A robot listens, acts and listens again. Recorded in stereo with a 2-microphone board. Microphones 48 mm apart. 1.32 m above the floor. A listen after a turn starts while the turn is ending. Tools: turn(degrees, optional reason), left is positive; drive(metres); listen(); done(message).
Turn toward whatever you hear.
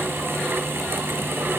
listen()
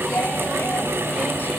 listen()
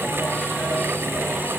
done("I can't make out anything to turn to.")